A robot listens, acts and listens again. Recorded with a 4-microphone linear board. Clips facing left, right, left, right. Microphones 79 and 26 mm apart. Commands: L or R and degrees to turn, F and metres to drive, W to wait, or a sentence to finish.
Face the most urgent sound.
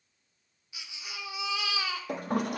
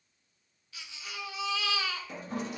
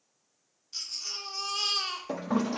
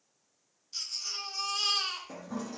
L15
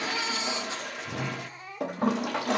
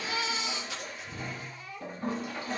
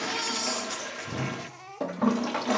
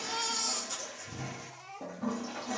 L150
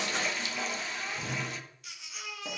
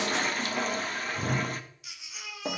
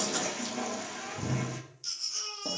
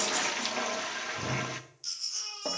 Found it: a baby crying, straight ahead, 2 to 4 m away.